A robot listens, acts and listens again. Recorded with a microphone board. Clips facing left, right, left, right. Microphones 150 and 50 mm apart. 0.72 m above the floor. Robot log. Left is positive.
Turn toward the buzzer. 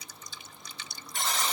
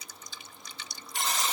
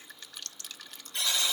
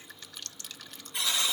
cmd yaw -30
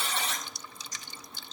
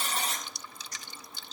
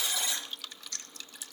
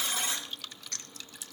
note: So it is at 140° right.
cmd yaw -140
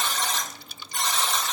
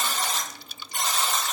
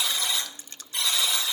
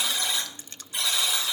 note: The buzzer is now 10° right.
cmd yaw -10
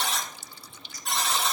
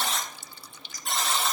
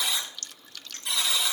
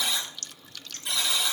end: Found it: a buzzer, straight ahead, over 4 m away.